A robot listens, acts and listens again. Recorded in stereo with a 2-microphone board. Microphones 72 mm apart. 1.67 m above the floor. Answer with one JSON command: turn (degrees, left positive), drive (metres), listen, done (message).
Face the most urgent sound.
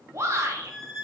{"turn": -40}
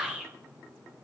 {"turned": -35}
{"turn": -10}
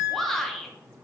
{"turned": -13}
{"done": "Found it: a shout, straight ahead."}